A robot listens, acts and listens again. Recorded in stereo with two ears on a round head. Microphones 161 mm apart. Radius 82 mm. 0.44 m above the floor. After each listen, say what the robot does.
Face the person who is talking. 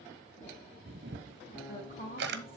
Turn 35° left.
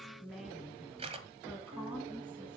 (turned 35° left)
Facing the woman speaking, over 4 m away.